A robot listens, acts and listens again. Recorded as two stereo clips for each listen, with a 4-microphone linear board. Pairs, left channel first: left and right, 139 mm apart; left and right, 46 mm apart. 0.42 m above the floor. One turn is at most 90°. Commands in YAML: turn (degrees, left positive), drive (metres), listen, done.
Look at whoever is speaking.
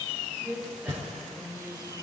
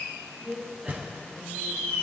turn: -30
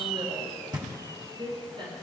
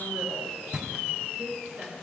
turn: -90
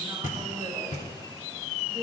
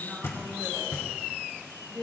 turn: -30
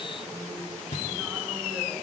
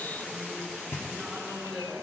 listen: true
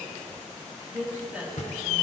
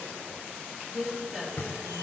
turn: -10
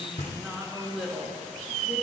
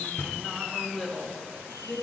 done: "Found it: a woman speaking, straight ahead, over 4 m away."